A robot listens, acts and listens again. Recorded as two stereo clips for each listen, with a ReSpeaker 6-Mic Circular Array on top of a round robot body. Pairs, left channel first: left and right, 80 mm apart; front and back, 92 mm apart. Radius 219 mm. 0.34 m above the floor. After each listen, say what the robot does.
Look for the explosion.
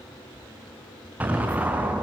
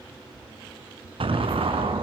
Turn 160° right.
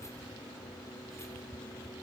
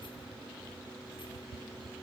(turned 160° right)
I heard an explosion from this way, but can't make it out now.